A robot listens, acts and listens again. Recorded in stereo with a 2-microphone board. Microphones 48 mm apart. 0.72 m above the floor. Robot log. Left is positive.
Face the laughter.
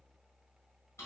cmd idle
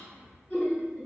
note: The laughter: about 35° left or 145° left.
cmd yaw +35
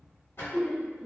end: Found it: laughter, straight ahead, under 1 m away.